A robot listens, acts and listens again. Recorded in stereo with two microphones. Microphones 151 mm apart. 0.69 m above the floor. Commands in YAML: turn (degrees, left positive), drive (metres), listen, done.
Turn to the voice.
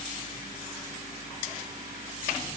listen: true
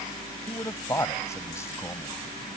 turn: 20
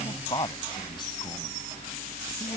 turn: 30
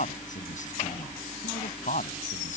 turn: 120
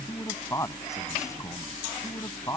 turn: 20
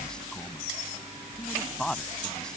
done: "Found it: a man speaking, straight ahead."